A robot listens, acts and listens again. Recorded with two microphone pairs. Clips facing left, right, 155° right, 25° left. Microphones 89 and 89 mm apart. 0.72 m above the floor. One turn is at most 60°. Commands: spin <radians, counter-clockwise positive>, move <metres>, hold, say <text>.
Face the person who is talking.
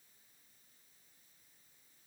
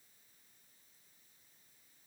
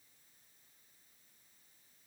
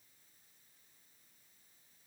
hold
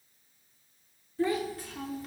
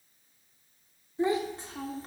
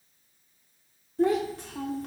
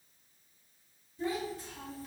spin -1.05
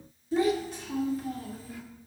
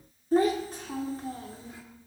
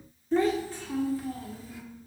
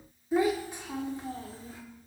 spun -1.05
spin -0.52
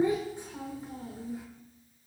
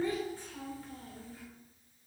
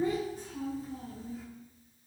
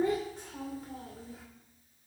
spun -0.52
spin 0.35
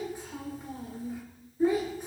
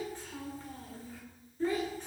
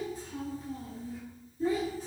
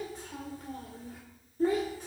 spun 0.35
spin 0.26
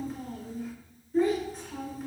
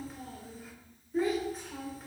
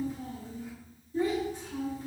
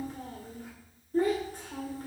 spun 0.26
say Found it: a child speaking, straight ahead, 2 to 4 m away.